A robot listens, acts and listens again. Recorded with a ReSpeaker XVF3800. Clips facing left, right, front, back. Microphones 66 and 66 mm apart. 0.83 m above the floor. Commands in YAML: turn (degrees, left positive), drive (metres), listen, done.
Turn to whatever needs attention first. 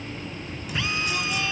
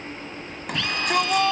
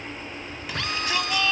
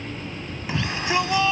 turn: -115
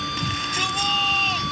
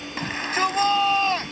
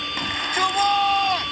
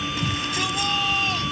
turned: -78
turn: -40
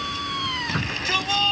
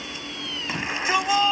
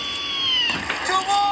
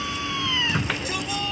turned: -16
turn: -20
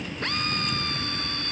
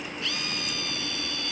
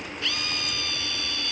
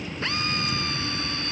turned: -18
listen: true
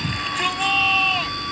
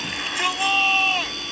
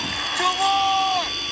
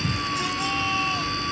done: "Found it: a shout, straight ahead."